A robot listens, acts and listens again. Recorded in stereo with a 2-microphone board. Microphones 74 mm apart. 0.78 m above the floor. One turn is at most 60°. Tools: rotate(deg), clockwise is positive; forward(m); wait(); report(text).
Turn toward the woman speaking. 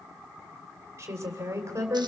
rotate(40)
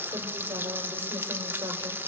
wait()
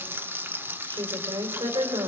rotate(60)
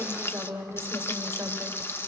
rotate(40)
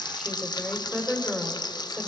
report("Facing the woman speaking.")